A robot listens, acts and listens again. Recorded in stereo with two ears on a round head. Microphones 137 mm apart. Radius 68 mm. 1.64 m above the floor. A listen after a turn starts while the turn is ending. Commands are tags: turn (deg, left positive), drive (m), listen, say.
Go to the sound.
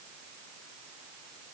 <listen/>
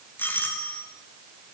<turn deg="30"/>
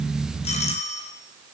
<turn deg="135"/>
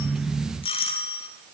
<turn deg="35"/>
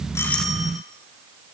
<listen/>
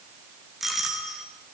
<drive m="1.0"/>
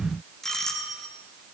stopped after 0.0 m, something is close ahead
<say>Blocked. The doorbell is further on, straight ahead.</say>